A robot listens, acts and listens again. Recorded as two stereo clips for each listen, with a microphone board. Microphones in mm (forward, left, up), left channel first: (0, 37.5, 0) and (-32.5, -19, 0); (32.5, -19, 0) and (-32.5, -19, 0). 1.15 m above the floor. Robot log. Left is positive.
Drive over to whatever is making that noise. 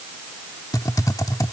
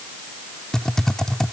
note: The typing on a keyboard: 80° left.
cmd yaw +80
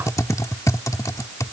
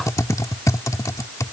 note: The typing on a keyboard is now 30° left.
cmd yaw +30
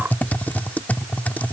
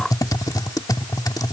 cmd fwd 1.0
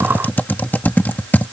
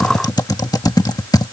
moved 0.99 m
cmd fwd 1.0
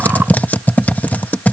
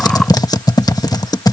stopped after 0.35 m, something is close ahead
end: I am next to the typing on a keyboard.